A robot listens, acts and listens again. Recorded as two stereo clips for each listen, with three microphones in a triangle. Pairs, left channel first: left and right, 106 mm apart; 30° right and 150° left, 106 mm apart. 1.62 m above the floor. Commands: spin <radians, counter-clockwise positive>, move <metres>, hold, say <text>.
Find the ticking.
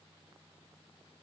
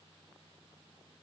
hold
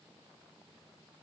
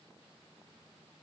hold
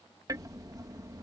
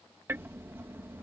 spin -2.44
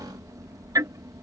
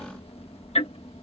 spin -0.61
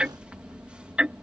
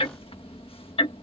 spin -0.17
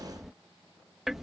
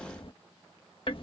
say Facing the ticking.